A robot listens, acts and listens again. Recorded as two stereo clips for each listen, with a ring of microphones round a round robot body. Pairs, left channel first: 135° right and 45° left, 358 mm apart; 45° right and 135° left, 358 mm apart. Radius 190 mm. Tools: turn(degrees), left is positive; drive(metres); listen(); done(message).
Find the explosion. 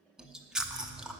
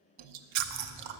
turn(degrees=170)
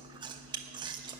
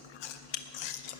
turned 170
done("Facing where the explosion came from. I can't hear it now.")